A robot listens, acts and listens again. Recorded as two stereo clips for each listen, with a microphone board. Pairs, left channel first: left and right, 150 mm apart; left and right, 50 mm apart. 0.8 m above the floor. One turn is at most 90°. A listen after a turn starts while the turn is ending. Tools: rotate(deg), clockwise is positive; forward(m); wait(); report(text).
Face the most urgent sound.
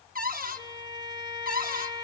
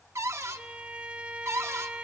wait()
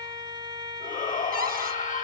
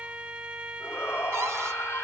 rotate(-60)
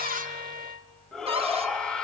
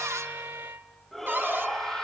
report("Facing the shout, 1 to 2 m away.")